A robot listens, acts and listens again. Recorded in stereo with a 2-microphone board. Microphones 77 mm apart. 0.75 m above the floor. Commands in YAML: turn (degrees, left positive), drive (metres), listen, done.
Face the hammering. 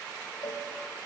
listen: true
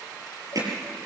turn: -55
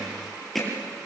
done: "Facing the hammering, over 4 m away."